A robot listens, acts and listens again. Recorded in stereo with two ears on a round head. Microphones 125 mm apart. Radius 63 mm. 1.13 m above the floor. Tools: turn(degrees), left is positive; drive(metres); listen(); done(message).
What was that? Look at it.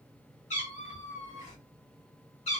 turn(degrees=50)
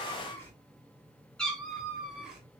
done("Facing the cat meowing.")